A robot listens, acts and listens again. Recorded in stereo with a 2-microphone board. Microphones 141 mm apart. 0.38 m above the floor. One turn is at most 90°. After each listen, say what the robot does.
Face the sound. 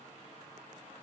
Keep listening.
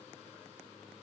Keep listening.
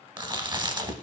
Turn 35° right.
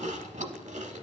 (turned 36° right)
Turn 90° right.
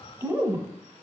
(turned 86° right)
Turn 20° right.
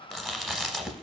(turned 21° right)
Found it: chewing, straight ahead.